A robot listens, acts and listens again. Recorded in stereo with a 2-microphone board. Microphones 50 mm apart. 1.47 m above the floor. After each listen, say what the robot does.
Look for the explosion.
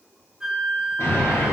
Turn 65° left.
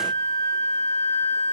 Keep listening.
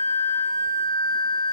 I heard an explosion, but can't make it out now. It was about straight ahead or 50° left.